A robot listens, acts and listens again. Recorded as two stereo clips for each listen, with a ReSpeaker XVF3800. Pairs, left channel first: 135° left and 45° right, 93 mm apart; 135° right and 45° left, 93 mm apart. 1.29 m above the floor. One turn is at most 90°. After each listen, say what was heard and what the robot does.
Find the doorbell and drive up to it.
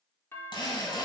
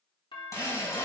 The doorbell: 160° right. Turn 90° right.
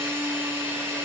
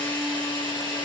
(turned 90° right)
Nothing new. It was at 70° right. Turn 70° right.
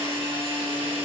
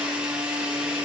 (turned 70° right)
Keep listening.
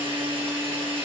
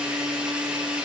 Facing where the doorbell came from. I can't hear it now. I did not reach it.